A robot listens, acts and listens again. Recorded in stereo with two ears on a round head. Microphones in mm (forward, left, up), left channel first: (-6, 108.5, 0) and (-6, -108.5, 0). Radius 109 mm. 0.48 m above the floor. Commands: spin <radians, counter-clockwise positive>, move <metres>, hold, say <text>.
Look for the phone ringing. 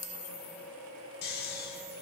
hold
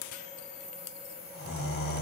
hold
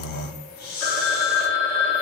spin 0.52
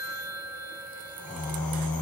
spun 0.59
spin -0.52
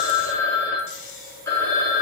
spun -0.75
spin 0.26
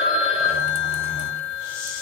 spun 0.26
say Facing the phone ringing, 1 to 2 m away.